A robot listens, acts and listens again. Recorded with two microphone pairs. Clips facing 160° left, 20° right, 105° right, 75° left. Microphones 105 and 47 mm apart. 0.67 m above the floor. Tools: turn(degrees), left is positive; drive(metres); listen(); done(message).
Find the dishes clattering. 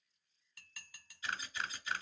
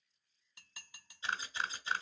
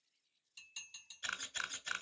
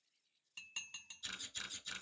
turn(degrees=50)
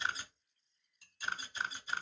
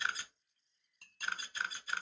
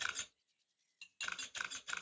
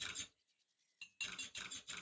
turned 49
done("Found it: dishes clattering, straight ahead, under 1 m away.")